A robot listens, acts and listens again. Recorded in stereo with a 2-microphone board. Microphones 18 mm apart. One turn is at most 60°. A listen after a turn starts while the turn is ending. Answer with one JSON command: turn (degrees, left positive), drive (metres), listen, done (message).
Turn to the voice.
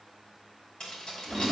{"listen": true}
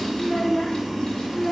{"turn": 25}
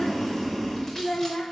{"turn": 60}
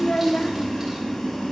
{"turn": 60}
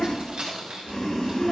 {"turn": 15}
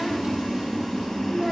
{"done": "I heard a child speaking from this way, but can't make it out now."}